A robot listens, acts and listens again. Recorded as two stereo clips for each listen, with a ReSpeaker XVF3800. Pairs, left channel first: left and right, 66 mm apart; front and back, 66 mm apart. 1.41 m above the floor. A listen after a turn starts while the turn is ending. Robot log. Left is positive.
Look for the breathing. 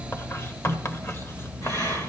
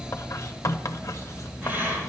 note: The breathing: 120° left.
cmd yaw +120
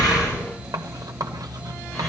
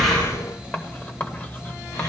cmd idle
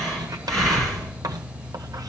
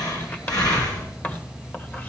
note: The breathing is now 10° left.
cmd yaw +10
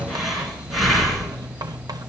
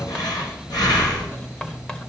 end: Facing the breathing.